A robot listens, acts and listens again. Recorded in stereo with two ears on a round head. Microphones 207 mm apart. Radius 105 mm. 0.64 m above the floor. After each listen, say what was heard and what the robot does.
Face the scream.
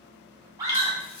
The scream: about 15° right or 165° right. Turn 15° right.
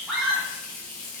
Facing the scream, 1 to 2 m away.